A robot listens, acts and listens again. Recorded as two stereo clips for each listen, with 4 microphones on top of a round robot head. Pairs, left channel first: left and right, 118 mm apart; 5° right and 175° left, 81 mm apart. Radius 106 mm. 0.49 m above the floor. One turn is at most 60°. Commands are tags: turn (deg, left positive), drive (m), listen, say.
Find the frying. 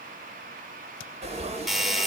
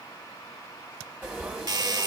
<turn deg="-60"/>
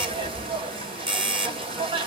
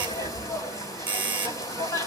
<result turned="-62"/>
<turn deg="-50"/>
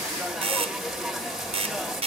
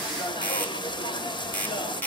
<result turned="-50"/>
<say>Facing the frying.</say>